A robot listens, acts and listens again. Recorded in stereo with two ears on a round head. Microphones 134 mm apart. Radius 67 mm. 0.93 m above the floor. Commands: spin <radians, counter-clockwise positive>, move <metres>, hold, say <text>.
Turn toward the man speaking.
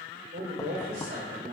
spin -1.05
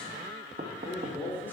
spin 0.26
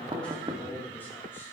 spin 0.17
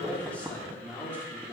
spin 0.26
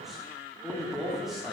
say Facing the man speaking, 2 to 4 m away.